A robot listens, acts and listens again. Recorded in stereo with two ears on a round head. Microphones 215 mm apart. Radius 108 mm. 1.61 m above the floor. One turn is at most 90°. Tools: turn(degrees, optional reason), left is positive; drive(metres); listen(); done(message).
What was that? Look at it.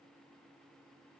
listen()
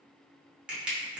turn(degrees=-30)
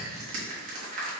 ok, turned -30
turn(degrees=-90, reason="So it is at 145° right.")
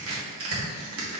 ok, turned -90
turn(degrees=-65, reason="The crushing is now 65° right.")
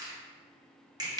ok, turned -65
turn(degrees=-15, reason="The crushing is now 15° right.")
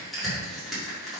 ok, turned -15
done("Facing the crushing, 1 to 2 m away.")